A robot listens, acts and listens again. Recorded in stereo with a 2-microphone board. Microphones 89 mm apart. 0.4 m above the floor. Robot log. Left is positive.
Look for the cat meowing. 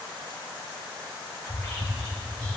cmd idle
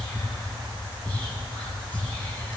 cmd idle
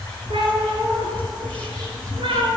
cmd yaw -90
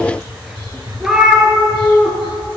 end: Facing the cat meowing.